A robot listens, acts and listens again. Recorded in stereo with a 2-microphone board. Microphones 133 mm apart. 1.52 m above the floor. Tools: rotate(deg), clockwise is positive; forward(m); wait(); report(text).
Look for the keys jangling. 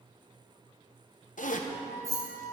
rotate(25)
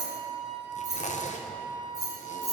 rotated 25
rotate(120)
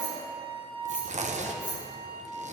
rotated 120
rotate(-20)
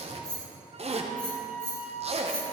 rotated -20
report("Found it: keys jangling, straight ahead, over 4 m away.")